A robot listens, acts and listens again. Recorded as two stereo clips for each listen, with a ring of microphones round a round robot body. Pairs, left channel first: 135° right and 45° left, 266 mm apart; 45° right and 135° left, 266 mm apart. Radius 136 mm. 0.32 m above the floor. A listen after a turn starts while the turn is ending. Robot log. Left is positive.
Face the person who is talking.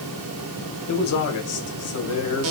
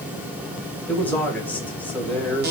note: The man speaking: 130° right.
cmd yaw -130
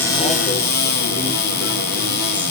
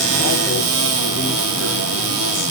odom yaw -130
cmd idle
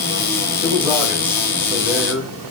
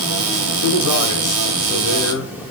note: The man speaking is now 40° right.
cmd yaw -40
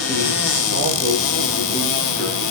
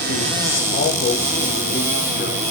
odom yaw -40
end: Facing the man speaking, 1 to 2 m away.